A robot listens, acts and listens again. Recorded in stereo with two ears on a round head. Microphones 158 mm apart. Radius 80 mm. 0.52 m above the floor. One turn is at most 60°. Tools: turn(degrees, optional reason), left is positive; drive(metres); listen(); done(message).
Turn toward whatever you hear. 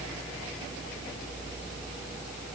listen()
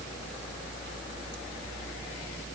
listen()
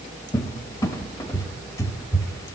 turn(degrees=20, reason="The cupboard door: about 20° left or 160° left.")
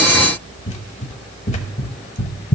turn(degrees=60, reason="So it is at 140° left.")
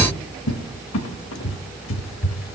turn(degrees=60, reason="The cupboard door is now 85° left.")
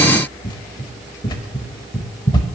turn(degrees=25, reason="The cupboard door is now 25° left.")
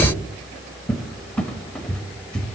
done("Found it: a cupboard door, straight ahead.")